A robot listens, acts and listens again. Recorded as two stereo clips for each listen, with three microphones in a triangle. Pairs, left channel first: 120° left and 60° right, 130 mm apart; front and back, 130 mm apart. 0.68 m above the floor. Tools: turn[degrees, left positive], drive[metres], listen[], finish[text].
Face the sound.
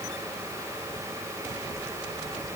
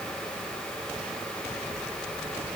Action: listen[]
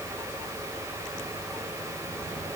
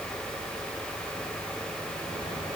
Action: listen[]
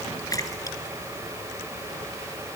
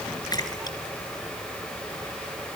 Thought: The splash: 60° left.
Action: turn[60]
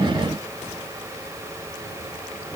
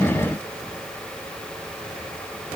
Action: finish[I heard a splash from this way, but can't make it out now.]